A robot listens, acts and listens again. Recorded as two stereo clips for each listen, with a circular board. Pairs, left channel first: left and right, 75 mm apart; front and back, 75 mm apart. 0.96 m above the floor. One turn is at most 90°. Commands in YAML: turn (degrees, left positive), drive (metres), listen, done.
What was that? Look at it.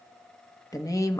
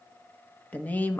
turn: 60
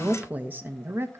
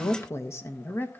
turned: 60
turn: -55
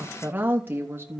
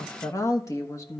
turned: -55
turn: -40
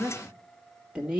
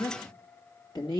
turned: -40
turn: -10
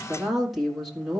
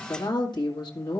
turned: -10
done: "Facing the woman speaking."